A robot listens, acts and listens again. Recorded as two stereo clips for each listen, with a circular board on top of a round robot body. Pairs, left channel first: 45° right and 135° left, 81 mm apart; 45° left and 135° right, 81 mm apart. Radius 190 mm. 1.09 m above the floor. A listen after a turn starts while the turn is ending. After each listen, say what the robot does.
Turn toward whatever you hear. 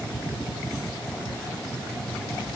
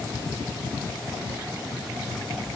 Keep listening.
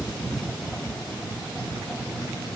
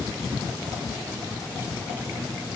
Keep listening.
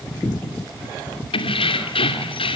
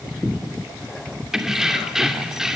Turn 50° right.
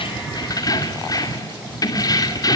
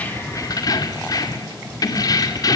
Facing the keys jangling.